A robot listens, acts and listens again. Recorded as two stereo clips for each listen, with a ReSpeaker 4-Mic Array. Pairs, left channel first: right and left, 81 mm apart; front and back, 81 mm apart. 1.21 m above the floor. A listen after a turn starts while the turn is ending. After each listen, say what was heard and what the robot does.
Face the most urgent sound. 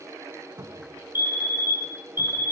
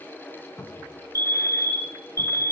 The fire alarm: 145° left. Turn 145° left.
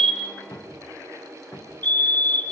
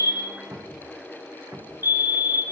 The fire alarm is now 25° right. Turn 25° right.
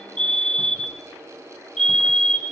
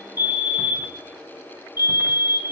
Facing the fire alarm, 1 to 2 m away.